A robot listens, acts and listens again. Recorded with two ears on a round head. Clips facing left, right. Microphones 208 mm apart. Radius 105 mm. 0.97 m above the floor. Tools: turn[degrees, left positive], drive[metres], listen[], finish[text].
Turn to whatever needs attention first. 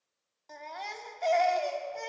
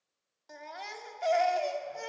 Action: turn[-30]
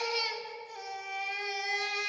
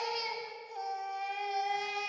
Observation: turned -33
Thought: So it is at 25° left.
Action: turn[25]
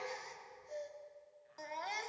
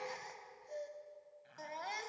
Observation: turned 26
Action: finish[Facing the baby crying.]